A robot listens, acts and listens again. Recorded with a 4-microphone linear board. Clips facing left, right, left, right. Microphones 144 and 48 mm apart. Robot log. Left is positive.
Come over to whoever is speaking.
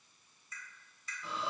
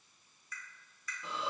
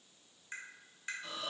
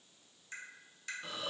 cmd idle
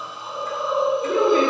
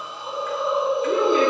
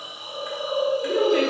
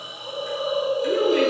note: The woman speaking: about 45° left or 135° left.
cmd yaw +45
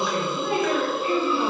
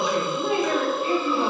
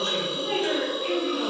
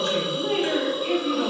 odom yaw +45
note: So it is at 85° left.
cmd yaw +85
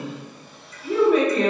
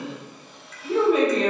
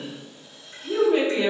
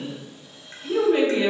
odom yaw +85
cmd fwd 1.0
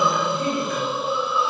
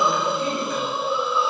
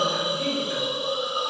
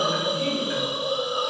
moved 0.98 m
cmd idle
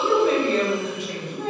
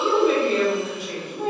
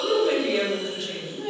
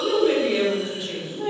cmd fwd 1.0
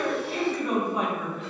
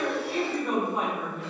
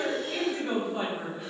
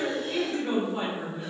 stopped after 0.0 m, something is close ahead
end: Arrived at the woman speaking, straight ahead.